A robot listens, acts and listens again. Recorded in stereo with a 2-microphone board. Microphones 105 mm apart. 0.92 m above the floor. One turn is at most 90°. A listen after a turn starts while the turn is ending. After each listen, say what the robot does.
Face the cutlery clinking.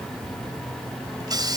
Keep listening.
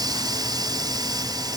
Keep listening.
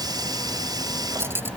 Turn 20° right.
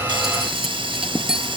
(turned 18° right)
Facing the cutlery clinking.